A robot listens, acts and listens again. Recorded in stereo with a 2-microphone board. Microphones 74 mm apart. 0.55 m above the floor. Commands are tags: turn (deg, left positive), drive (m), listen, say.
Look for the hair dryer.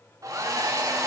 <turn deg="-45"/>
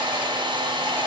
<turn deg="-90"/>
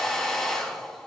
<say>Facing the hair dryer, 1 to 2 m away.</say>